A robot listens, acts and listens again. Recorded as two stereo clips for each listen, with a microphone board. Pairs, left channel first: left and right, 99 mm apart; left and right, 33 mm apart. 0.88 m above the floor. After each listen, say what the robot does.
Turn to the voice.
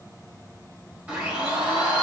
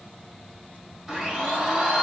Keep listening.
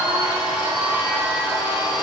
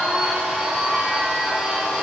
Keep listening.
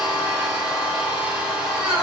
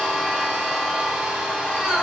I can't make out anyone speaking to turn to.